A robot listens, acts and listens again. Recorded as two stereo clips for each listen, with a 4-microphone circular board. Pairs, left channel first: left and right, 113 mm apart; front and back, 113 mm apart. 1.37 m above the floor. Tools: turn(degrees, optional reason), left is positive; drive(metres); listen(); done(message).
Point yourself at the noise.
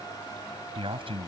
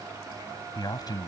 turn(degrees=-55, reason="The man speaking: 55° right.")
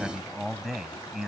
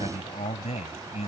done("Found it: a man speaking, straight ahead.")